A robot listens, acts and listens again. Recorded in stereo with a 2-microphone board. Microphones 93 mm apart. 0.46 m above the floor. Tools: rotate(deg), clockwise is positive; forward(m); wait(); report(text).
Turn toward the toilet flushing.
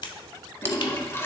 rotate(-25)
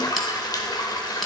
rotate(-120)
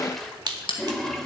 report("Facing the toilet flushing, 1 to 2 m away.")